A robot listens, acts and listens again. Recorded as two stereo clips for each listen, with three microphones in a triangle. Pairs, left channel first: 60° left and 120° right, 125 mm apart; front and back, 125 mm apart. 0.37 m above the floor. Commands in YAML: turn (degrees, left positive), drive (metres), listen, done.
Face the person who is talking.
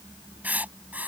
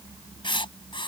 listen: true
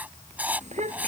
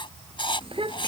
turn: -140
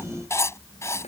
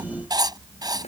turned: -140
turn: 30
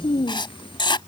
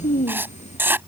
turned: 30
turn: 10
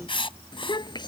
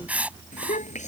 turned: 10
done: "Found it: a child speaking, straight ahead."